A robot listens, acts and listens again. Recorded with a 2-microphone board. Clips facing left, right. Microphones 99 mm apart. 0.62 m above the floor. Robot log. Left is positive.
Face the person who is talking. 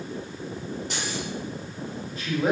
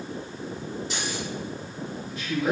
note: The man speaking: about 35° left or 145° left.
cmd yaw +35
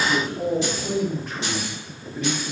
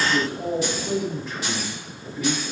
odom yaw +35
note: So it is at 100° left.
cmd yaw +100
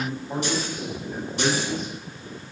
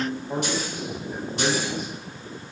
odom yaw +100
note: The man speaking is now 10° right.
cmd yaw -10
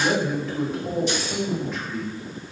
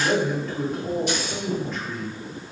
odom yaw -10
end: Facing the man speaking, 1 to 2 m away.